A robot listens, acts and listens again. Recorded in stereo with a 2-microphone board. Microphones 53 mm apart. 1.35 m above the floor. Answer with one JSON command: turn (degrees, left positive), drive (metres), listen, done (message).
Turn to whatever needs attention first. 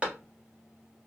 {"listen": true}
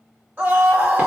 {"turn": -30}
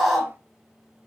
{"done": "Found it: a scream, straight ahead."}